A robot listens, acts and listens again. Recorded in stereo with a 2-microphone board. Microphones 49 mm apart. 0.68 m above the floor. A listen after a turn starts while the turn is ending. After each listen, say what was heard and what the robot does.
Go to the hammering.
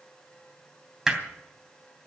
Turn 30° right.
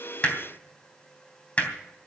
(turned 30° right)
So it is at 30° left. Turn 30° left.
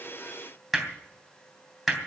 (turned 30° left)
Drive 1.0 m forward.
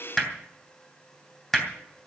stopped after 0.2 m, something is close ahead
The hammering is now 10° left. Turn 10° left.
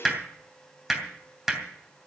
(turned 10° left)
Blocked. The hammering is further on, straight ahead.